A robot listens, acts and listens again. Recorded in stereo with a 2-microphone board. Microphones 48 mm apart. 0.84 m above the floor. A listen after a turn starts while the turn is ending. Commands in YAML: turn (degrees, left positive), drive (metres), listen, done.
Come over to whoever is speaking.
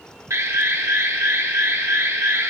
listen: true
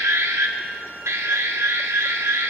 listen: true
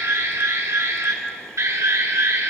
done: "I can't make out anyone speaking to turn to."